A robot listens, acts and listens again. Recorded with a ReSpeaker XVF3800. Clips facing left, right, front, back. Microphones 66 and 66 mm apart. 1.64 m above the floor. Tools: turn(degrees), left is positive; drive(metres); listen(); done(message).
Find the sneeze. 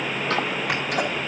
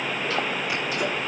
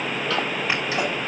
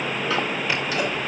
listen()
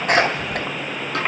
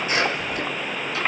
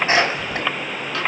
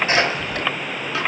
turn(degrees=65)
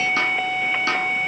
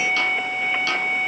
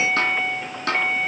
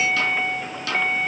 done("I heard a sneeze from this way, but can't make it out now.")